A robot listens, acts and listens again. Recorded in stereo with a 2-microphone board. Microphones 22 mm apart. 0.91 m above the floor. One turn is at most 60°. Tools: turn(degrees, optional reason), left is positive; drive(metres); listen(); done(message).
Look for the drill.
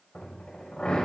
turn(degrees=60)
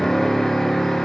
turn(degrees=30, reason="So it is at 30° left.")
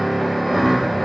done("Facing the drill.")